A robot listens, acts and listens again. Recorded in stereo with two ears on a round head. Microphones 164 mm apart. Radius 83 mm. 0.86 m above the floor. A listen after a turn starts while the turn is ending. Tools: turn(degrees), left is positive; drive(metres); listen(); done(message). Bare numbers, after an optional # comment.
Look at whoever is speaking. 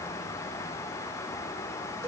listen()
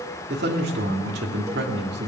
# The man speaking: about 60° right or 120° right.
turn(-60)
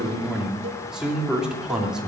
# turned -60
done("Facing the man speaking, 2 to 4 m away.")